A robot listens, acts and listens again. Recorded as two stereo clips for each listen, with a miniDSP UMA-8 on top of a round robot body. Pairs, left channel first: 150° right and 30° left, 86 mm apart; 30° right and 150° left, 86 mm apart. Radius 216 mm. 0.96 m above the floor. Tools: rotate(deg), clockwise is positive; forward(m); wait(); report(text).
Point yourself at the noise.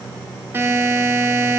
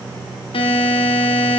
rotate(35)
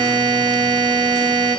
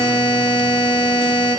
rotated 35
report("Found it: a buzzer, straight ahead.")